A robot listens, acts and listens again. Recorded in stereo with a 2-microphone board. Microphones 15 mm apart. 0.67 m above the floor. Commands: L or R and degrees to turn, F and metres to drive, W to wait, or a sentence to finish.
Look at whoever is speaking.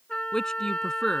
L45
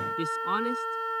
Found it: a man speaking, straight ahead.